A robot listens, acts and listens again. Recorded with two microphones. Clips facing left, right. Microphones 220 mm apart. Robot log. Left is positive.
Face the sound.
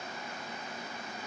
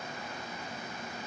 cmd idle
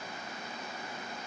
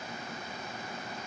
cmd idle
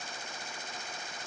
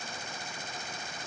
end: I can't make out anything to turn to.